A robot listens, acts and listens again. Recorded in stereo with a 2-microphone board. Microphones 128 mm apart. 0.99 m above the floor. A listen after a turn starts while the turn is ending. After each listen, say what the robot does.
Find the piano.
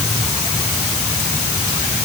Keep listening.
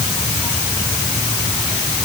Keep listening.
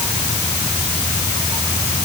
I can't make out a piano to turn to.